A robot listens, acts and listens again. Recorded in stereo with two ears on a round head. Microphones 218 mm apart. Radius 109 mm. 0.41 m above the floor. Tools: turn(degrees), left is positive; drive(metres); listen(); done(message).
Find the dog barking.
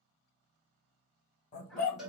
turn(degrees=30)
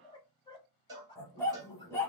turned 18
turn(degrees=10)
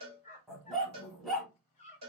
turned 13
done("Facing the dog barking.")